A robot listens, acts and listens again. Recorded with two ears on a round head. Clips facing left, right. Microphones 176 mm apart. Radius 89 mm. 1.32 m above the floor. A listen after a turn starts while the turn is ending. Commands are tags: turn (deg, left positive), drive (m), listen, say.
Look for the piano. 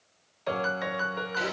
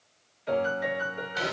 <turn deg="90"/>
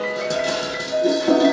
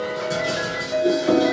<say>Found it: a piano, straight ahead, under 1 m away.</say>